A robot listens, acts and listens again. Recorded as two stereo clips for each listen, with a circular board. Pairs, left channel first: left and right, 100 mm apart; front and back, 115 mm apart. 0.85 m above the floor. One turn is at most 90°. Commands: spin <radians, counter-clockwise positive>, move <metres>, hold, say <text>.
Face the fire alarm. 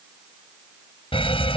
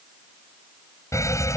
spin 1.13
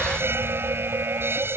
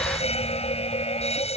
spin -0.44
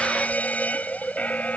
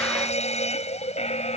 spin 0.26
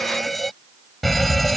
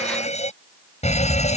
say Facing the fire alarm.